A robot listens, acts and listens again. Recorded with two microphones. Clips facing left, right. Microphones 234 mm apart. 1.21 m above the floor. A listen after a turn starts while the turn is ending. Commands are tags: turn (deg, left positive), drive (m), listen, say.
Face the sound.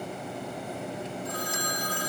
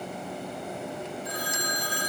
<turn deg="55"/>
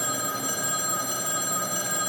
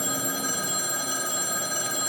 <turn deg="70"/>
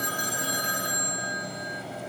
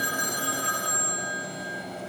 <turn deg="20"/>
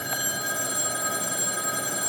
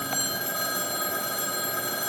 <say>Facing the phone ringing.</say>